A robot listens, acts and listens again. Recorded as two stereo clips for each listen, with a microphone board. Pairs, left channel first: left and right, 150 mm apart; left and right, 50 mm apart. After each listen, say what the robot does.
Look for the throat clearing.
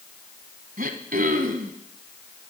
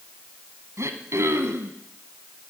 Turn 90° right.
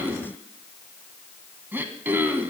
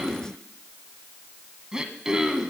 Turn 15° right.
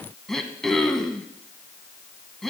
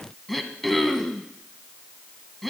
Facing the throat clearing.